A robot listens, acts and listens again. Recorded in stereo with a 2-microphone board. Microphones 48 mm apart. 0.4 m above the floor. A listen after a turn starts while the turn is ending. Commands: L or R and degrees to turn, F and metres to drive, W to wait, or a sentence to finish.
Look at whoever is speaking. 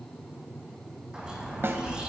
L50
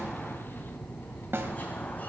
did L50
L55
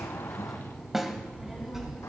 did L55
R10
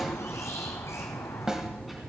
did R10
Facing the child speaking.